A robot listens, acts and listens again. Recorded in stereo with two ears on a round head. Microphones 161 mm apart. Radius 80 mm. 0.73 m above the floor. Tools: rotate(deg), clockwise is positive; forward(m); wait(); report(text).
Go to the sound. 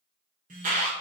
rotate(45)
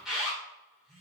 forward(1.0)
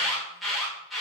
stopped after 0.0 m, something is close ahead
report("Blocked. The alarm is further on, straight ahead.")